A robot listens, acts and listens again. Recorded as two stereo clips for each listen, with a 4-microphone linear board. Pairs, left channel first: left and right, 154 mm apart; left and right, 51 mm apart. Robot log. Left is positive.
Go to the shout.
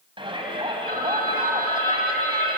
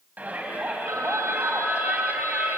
note: The shout: about 35° right or 145° right.
cmd yaw -35
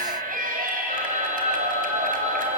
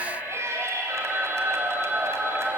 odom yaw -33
note: So it is at 115° right.
cmd yaw -115
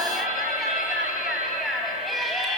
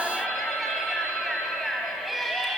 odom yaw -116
cmd fwd 1.0
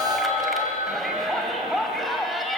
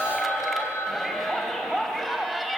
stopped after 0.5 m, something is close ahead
end: Blocked. The shout is further on, straight ahead.